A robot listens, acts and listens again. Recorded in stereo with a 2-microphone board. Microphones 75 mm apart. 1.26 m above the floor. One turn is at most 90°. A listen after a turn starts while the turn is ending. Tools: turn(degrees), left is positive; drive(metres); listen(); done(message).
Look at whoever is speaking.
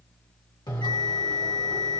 listen()
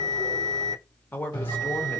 turn(degrees=25)
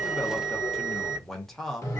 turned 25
done("Facing the man speaking.")